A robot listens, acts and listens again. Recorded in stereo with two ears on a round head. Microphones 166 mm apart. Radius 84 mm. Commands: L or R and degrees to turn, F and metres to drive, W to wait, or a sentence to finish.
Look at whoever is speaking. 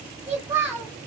R30
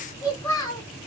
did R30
L20
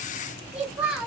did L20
Found it: a child speaking, straight ahead, 1 to 2 m away.